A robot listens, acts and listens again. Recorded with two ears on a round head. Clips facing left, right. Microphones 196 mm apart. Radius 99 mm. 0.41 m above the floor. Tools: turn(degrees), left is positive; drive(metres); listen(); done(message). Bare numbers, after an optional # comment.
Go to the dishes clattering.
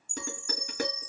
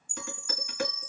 # The dishes clattering: about 35° left or 145° left.
turn(35)
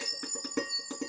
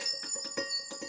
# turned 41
# So it is at 105° left.
turn(105)
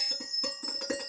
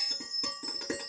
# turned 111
# The dishes clattering is now 10° right.
turn(-10)
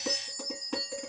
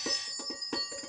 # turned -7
drive(1.0)
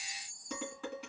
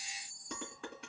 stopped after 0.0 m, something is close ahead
done("Something is in my way. I am facing the dishes clattering but have not reached it.")